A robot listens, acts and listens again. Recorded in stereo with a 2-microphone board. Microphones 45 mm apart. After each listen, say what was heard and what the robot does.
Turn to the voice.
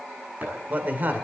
The man speaking: about 50° right or 130° right. Turn 50° right.
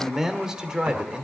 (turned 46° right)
So it is at 20° right. Turn 20° right.
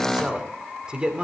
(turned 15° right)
The man speaking is now 25° right. Turn 25° right.
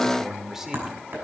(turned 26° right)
The man speaking is now 10° right. Turn 10° right.
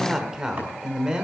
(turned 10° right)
The man speaking is now 20° right. Turn 20° right.
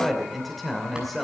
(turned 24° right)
Facing the man speaking.